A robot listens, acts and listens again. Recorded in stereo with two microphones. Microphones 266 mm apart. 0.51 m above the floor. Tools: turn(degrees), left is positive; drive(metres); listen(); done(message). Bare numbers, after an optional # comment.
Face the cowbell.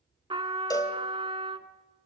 turn(30)
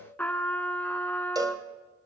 # So it is at 15° right.
turn(-15)
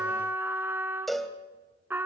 done("Found it: a cowbell, straight ahead, 1 to 2 m away.")